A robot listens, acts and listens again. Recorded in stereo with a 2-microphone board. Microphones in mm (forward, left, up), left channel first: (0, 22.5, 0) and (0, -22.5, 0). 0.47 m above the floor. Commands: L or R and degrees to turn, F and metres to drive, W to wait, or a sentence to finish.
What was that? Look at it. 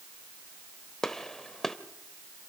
L30
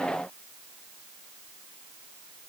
W
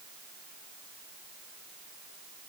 I heard a gunshot, but can't make it out now. It was about 20° right or 140° left.